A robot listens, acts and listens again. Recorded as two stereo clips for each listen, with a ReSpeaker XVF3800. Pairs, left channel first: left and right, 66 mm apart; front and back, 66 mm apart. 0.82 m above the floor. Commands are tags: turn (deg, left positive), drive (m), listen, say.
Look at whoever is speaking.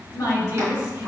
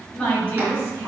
<turn deg="55"/>
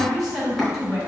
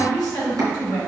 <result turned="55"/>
<say>Facing the woman speaking, 2 to 4 m away.</say>